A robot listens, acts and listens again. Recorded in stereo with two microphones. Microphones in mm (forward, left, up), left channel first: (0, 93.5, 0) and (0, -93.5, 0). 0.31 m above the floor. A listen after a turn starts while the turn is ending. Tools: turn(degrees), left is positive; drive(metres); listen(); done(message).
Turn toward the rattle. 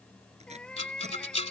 turn(degrees=35)
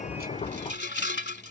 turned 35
turn(degrees=110)
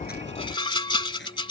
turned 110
turn(degrees=25)
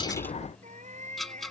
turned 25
done("Facing the rattle.")